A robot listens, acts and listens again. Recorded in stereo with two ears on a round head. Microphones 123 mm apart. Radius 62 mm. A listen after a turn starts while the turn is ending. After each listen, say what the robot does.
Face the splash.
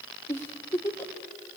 Keep listening.
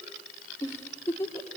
Keep listening.
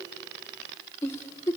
I can't make out a splash, only a giggle.